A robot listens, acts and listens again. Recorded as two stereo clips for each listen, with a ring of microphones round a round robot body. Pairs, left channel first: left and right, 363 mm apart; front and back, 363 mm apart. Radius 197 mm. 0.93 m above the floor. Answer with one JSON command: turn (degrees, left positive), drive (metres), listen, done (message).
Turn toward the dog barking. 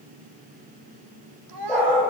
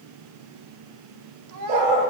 {"turn": 175}
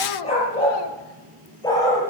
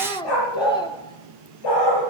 {"turn": 10}
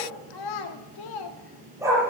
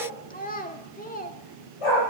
{"turn": -10}
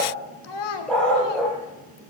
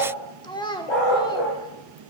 {"done": "Facing the dog barking, over 4 m away."}